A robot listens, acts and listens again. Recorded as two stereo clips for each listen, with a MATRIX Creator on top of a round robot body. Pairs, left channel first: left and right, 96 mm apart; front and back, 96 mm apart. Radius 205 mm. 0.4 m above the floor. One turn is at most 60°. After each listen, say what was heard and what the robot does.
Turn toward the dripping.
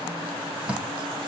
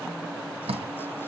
The dripping: 165° right. Turn 60° right.
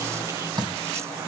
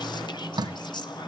The dripping is now 135° right. Turn 60° right.
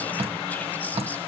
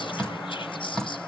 The dripping is now 85° right. Turn 60° right.
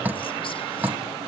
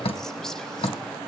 The dripping is now 15° right. Turn 15° right.
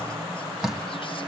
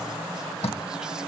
Facing the dripping.